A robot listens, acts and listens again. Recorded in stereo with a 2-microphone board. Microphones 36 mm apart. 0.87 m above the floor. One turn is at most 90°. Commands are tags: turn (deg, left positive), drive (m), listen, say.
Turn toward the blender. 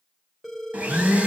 <turn deg="-50"/>
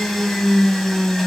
<say>Found it: a blender, straight ahead.</say>